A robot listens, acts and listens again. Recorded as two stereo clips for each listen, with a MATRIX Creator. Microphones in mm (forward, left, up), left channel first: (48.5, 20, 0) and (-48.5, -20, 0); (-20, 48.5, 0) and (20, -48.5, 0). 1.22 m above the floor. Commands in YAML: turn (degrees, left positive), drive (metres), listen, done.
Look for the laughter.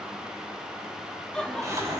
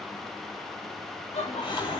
turn: 105
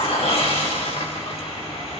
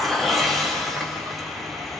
listen: true
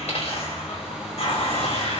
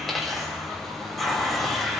listen: true
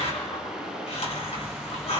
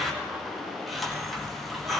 done: "I heard laughter from this way, but can't make it out now."